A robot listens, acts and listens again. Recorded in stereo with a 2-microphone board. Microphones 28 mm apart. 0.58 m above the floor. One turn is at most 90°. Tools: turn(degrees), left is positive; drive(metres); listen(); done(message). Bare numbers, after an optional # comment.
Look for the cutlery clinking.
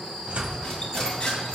# The cutlery clinking: about 25° left or 155° left.
turn(25)
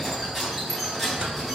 done("Facing the cutlery clinking.")